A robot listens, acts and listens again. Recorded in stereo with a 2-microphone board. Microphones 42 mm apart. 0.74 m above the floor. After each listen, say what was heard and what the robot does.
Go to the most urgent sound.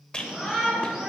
The shout: about 20° right or 160° right. Turn 20° right.
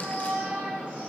So it is at 140° right. Turn 140° right.
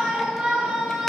The shout is now 15° right. Turn 15° right.
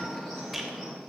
Drive 1.0 m forward.
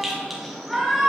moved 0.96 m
Drive 1.0 m forward.
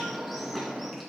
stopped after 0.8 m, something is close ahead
Arrived at the shout, straight ahead.